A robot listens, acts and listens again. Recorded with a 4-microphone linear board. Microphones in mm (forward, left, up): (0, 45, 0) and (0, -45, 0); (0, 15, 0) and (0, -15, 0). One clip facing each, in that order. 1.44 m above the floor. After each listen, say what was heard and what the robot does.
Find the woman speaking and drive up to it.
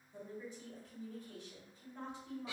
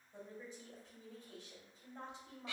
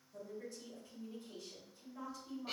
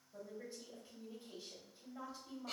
The woman speaking: about 20° right or 160° right. Turn 20° right.
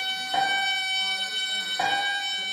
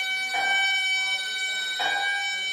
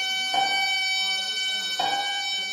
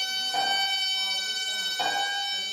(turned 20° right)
Keep listening.
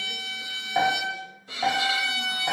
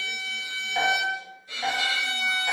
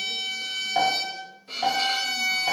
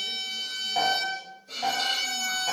Keep listening.
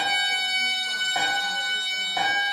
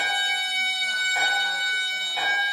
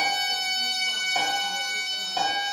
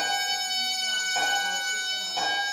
I heard a woman speaking, but can't make it out now. It was about straight ahead or 140° right. I did not reach it.